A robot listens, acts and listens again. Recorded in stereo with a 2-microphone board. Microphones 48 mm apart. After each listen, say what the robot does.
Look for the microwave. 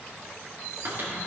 Turn 50° right.
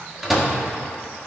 Facing the microwave.